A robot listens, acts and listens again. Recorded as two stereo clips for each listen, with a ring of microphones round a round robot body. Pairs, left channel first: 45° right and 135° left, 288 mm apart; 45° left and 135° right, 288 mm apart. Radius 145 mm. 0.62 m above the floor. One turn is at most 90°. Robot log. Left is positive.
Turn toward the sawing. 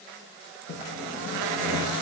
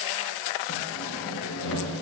end: Facing the sawing, over 4 m away.